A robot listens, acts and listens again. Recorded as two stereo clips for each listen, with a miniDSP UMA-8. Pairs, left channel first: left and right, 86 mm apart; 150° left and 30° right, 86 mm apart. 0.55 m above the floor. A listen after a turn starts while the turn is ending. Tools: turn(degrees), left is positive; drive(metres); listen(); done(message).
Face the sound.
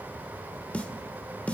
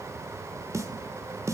turn(degrees=15)
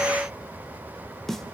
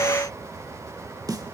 done("Facing the snare drum, 1 to 2 m away.")